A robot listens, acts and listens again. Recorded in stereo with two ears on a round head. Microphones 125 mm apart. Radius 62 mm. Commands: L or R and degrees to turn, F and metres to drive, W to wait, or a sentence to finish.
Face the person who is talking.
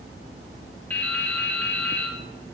W
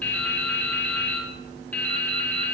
W
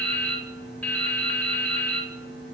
I can't make out anyone speaking, only dripping.